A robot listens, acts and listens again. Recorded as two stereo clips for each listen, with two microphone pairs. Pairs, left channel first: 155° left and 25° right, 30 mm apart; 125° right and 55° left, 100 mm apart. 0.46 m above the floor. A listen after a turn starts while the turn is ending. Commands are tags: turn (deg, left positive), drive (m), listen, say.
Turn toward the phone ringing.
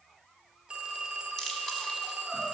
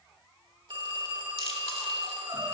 <turn deg="30"/>
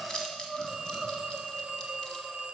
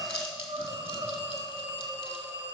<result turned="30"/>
<turn deg="25"/>
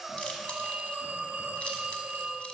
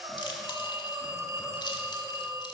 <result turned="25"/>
<say>Found it: a phone ringing, straight ahead, 1 to 2 m away.</say>